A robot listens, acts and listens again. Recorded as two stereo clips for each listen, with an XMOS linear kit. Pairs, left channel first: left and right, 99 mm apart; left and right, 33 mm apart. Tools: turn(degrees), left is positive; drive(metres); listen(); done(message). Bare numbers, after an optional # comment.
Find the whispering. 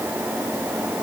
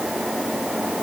listen()
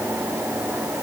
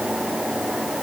listen()
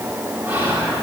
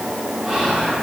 # The whispering: about 20° right or 160° right.
turn(-20)
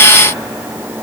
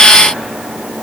listen()
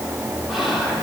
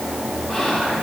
done("Facing the whispering, 1 to 2 m away.")